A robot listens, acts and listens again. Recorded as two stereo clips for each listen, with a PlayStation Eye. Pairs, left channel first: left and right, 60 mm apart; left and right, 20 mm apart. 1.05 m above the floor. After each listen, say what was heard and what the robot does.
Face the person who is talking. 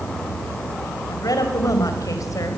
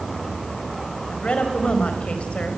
The woman speaking: about 70° left or 110° left. Turn 70° left.
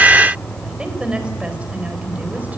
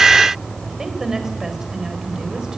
So it is at 25° right. Turn 25° right.
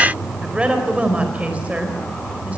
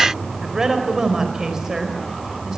The woman speaking is now 25° right. Turn 25° right.
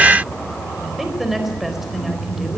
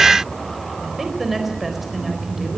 Found it: a woman speaking, straight ahead.